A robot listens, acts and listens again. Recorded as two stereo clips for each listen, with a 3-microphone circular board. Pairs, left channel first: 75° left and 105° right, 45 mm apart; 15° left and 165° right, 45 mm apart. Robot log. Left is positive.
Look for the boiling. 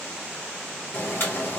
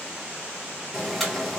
note: The boiling: 105° left.
cmd yaw +105
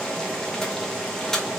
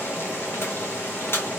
end: Facing the boiling.